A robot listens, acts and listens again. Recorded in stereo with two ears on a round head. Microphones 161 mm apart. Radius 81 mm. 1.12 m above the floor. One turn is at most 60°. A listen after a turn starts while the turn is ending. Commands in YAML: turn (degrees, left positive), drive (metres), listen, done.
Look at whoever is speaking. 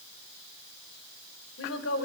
turn: 60
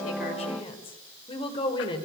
turn: 25
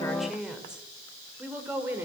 turn: -10
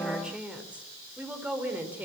turn: -10
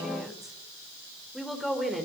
done: "Found it: a woman speaking, straight ahead, over 4 m away."